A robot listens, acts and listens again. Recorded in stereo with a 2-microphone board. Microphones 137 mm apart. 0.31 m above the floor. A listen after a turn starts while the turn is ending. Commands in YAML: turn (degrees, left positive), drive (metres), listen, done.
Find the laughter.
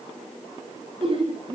turn: -40
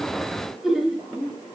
done: "Found it: laughter, straight ahead, over 4 m away."